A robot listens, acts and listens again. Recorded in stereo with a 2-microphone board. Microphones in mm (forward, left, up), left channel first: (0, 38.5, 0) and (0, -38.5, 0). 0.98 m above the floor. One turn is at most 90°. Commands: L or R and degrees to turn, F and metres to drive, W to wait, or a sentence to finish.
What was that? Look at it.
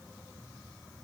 W
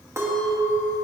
R35
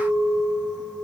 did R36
R90
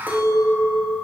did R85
R25
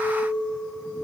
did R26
Found it: a clink, straight ahead.